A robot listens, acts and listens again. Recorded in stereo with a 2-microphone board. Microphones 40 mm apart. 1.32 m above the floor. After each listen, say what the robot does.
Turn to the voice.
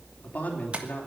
Turn 40° left.
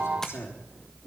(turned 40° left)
Turn 100° left.
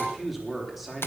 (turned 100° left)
Found it: a man speaking, straight ahead.